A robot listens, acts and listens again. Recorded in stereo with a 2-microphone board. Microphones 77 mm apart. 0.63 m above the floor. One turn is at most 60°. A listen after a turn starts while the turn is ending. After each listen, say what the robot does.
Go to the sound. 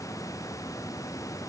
Keep listening.
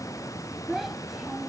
Turn 30° left.
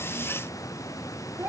Turn 30° right.
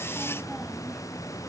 Keep listening.
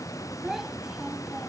Drive 1.0 m forward.
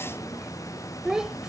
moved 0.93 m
Turn 10° right.
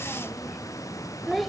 Drive 1.0 m forward.
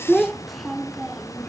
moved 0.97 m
Drive 1.0 m forward.
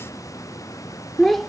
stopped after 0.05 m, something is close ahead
I am next to the child speaking.